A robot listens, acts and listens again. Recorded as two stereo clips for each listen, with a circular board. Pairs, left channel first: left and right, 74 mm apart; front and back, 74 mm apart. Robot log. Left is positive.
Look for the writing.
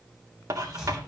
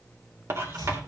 note: The writing: 130° right.
cmd yaw -130
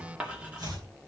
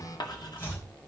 note: The writing is now 15° right.
cmd yaw -15
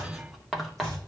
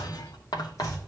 end: Facing the writing, 2 to 4 m away.